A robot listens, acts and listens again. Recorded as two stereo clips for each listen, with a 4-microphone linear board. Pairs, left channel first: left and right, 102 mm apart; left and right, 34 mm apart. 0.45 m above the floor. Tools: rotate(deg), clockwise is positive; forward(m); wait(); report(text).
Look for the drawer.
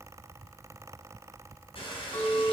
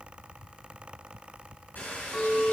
wait()
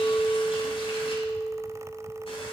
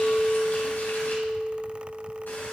wait()
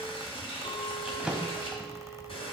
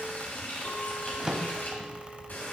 rotate(30)
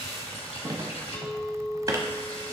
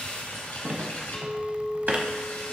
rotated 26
rotate(145)
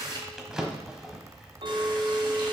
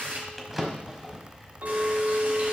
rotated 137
report("Found it: a drawer, straight ahead.")